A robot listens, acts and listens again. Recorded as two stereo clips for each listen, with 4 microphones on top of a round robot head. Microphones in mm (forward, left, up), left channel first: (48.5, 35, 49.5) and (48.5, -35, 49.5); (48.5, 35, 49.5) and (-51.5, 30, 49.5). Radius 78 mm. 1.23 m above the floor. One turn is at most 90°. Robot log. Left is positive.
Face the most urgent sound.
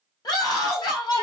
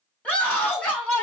note: The scream: 80° left.
cmd yaw +80
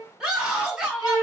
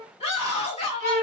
note: The scream is now 15° right.
cmd yaw -15
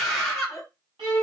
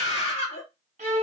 end: Facing the scream, 1 to 2 m away.